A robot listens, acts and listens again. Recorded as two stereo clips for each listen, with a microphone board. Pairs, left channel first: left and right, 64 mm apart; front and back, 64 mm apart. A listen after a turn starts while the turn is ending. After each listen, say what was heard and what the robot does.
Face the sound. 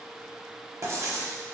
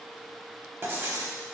The writing: 125° right. Turn 125° right.
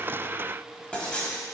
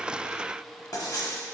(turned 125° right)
The writing is now 20° left. Turn 20° left.
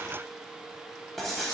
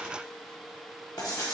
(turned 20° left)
Found it: writing, straight ahead, under 1 m away.